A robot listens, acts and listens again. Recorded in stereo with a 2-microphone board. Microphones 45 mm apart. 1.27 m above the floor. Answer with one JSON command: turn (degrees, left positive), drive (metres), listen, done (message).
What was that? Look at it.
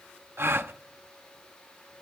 {"turn": -65}
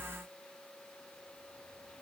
{"listen": true}
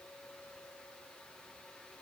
{"done": "I heard a gasp, but can't make it out now. It was about straight ahead or 50° right."}